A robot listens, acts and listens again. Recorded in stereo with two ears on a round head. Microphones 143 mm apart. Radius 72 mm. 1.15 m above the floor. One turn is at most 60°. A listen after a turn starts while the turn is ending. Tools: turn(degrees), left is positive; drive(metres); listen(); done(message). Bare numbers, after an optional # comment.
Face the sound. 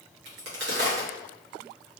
turn(-60)
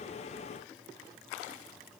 # Nothing new. It was at 30° right.
turn(-30)
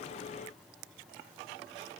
done("Facing where the crack came from. I can't hear it now.")